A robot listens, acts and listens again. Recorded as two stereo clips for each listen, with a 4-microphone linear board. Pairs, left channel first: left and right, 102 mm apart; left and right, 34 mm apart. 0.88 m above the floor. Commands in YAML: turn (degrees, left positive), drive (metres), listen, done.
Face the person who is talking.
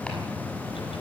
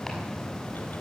listen: true
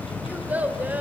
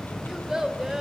turn: -15
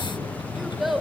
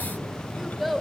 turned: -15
done: "Facing the child speaking, 2 to 4 m away."